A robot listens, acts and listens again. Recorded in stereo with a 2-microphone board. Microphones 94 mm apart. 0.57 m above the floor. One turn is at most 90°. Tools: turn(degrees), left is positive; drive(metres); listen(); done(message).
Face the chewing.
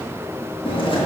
turn(degrees=60)
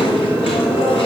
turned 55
turn(degrees=65)
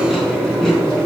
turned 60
done("Found it: chewing, straight ahead, 2 to 4 m away.")